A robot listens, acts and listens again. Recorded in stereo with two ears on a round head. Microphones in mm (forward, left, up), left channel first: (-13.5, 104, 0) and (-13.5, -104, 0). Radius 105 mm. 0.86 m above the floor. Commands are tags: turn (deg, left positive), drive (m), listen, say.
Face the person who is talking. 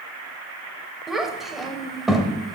<turn deg="30"/>
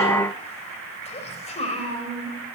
<turn deg="150"/>
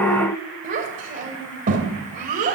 <turn deg="-35"/>
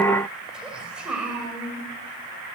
<say>Found it: a child speaking, straight ahead.</say>